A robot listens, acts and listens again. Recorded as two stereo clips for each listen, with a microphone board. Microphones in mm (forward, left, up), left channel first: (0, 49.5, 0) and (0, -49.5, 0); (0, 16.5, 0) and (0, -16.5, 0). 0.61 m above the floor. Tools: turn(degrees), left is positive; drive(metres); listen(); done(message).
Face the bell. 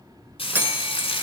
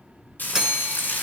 turn(degrees=-20)
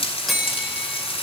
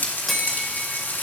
done("Found it: a bell, straight ahead.")